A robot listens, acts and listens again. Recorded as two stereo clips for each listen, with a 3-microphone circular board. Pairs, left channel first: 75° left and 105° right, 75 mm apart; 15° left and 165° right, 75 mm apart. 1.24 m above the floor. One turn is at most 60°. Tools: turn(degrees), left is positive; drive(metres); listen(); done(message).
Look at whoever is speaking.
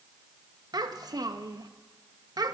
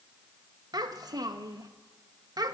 turn(degrees=-60)
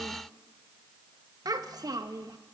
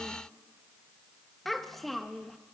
turn(degrees=-60)
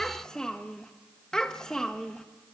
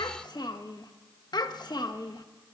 done("Found it: a child speaking, straight ahead, 1 to 2 m away.")